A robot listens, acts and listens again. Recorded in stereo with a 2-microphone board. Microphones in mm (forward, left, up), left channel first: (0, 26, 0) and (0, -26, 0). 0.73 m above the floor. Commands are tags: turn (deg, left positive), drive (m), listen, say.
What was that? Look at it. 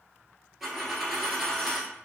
<turn deg="-30"/>
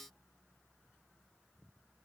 <listen/>
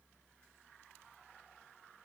<say>I heard a dropped coin, but can't make it out now. It was about 25° left or 145° right.</say>